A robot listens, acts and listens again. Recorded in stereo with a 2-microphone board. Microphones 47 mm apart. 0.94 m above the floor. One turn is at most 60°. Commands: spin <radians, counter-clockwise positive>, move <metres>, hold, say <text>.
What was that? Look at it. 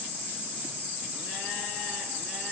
hold
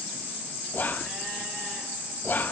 spin 0.70
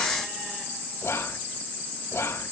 spin 1.05
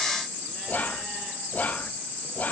spin 0.70
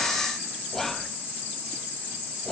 spin 0.17
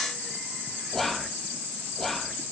say Found it: whispering, straight ahead.